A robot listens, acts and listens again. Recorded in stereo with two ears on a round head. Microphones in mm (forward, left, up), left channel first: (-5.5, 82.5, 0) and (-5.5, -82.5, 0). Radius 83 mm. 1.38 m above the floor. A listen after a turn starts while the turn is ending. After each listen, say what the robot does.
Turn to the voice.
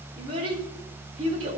Turn 30° right.
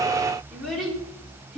Found it: a child speaking, straight ahead, 2 to 4 m away.